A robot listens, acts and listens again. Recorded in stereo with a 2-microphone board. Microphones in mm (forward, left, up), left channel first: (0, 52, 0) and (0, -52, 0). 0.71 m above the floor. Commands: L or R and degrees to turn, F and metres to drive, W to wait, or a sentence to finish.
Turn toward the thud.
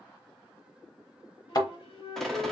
L40
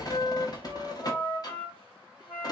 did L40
W
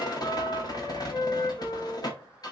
I heard a thud, but can't make it out now. It was about straight ahead or 100° left.